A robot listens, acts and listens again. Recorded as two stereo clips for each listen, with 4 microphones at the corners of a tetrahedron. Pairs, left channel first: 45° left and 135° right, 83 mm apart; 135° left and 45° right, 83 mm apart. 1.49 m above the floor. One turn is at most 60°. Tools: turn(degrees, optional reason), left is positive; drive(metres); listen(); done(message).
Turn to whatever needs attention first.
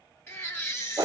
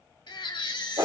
turn(degrees=60, reason="The baby crying: 105° left.")
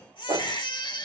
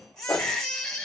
turn(degrees=55, reason="The baby crying is now 55° left.")
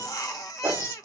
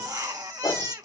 done("Found it: a baby crying, straight ahead.")